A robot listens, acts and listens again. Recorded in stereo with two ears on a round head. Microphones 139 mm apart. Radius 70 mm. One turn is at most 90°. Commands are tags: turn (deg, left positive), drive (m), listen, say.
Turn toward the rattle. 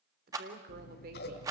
<turn deg="-20"/>
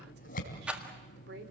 <turn deg="-10"/>
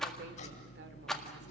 <say>Facing the rattle.</say>